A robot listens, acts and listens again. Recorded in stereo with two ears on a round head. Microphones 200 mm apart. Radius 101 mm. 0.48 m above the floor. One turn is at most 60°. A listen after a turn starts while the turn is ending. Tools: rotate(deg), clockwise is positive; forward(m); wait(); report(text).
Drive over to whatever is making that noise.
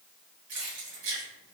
rotate(60)
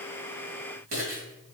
rotate(40)
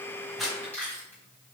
forward(1.0)
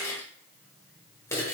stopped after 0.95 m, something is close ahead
rotate(-15)
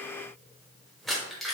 report("Arrived at the keys jangling, straight ahead.")